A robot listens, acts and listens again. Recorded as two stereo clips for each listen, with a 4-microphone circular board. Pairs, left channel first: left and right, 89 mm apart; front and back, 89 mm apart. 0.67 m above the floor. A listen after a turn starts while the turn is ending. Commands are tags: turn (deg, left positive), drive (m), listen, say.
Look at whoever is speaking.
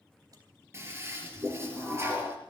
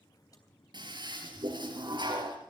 <listen/>
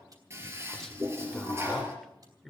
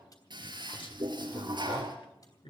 <say>Found it: a man speaking, straight ahead.</say>